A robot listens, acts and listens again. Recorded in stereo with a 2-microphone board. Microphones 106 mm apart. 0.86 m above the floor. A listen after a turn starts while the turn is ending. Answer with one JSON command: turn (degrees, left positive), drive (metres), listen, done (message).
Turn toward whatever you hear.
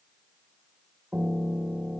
{"turn": -30}
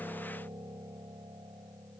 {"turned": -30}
{"turn": -135}
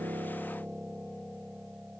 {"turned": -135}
{"turn": -10}
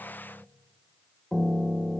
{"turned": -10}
{"done": "Facing the piano."}